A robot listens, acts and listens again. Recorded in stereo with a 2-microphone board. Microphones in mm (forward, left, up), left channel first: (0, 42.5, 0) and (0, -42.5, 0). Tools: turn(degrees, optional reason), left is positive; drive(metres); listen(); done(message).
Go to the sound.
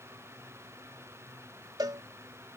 turn(degrees=-55, reason="The cowbell: about 55° right or 125° right.")
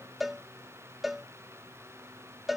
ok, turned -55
drive(metres=1.0)
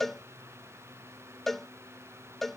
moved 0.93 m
drive(metres=1.0)
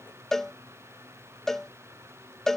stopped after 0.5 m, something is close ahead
done("Arrived at the cowbell, straight ahead.")